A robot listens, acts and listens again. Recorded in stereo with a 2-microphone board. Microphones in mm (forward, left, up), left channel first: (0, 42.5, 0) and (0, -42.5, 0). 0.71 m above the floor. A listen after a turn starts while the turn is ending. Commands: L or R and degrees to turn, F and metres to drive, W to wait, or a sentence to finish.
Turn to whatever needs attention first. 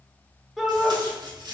L30
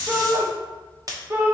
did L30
R30
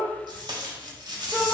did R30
Facing the shout, under 1 m away.